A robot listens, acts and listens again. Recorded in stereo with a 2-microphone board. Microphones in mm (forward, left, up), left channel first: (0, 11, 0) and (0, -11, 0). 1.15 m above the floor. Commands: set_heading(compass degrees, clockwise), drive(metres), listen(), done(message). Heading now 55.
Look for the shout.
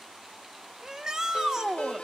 set_heading(80)
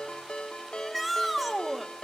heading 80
done("Found it: a shout, straight ahead.")